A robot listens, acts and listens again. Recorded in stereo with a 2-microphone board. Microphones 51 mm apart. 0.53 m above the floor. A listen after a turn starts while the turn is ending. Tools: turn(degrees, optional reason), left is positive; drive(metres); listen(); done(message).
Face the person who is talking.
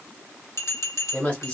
turn(degrees=20, reason="The woman speaking: about 20° left or 160° left.")
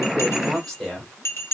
done("Facing the woman speaking.")